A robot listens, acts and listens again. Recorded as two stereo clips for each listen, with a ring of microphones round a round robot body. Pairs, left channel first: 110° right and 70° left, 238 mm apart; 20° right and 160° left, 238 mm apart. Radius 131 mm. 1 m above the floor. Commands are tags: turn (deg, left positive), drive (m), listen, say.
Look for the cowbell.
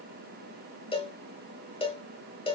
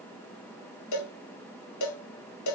<turn deg="-45"/>
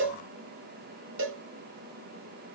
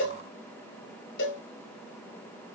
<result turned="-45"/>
<turn deg="25"/>
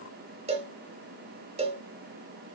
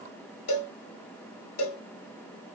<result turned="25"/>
<say>Found it: a cowbell, straight ahead, 1 to 2 m away.</say>